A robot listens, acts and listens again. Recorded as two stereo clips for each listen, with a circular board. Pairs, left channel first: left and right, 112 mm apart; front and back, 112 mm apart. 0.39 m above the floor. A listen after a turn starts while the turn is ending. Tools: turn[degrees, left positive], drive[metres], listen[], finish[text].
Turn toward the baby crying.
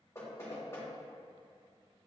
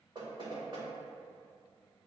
Action: listen[]
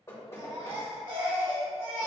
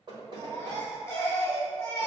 Thought: The baby crying: 65° right.
Action: turn[-65]
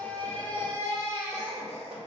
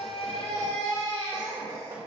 Thought: The baby crying is now 25° left.
Action: turn[25]
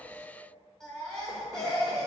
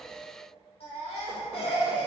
Action: finish[Facing the baby crying, 1 to 2 m away.]